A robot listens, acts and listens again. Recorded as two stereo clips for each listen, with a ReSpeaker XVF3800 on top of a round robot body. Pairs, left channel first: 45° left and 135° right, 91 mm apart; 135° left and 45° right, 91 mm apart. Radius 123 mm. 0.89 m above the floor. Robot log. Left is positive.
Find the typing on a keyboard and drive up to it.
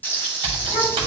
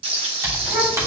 note: The typing on a keyboard: 105° right.
cmd yaw -105
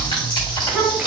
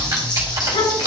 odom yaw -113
note: The typing on a keyboard is now 10° left.
cmd yaw +10
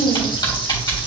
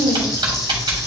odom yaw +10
cmd fwd 1.0
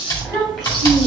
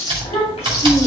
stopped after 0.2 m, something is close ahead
note: The typing on a keyboard is now 10° right.
cmd yaw -10
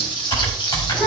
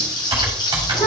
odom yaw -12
end: Something is in my way. I am facing the typing on a keyboard but have not reached it.